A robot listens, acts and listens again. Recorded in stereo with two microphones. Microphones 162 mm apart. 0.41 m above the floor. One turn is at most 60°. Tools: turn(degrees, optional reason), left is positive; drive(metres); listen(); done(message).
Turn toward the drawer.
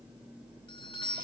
listen()
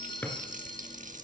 turn(degrees=30)
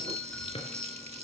turn(degrees=60, reason="So it is at 140° left.")
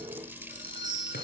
turn(degrees=60, reason="Nothing new. It was at 80° left.")
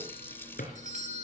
turn(degrees=60, reason="The drawer is now 65° left.")
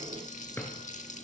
turn(degrees=10, reason="The drawer is now 10° left.")
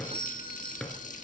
done("Facing the drawer, 2 to 4 m away.")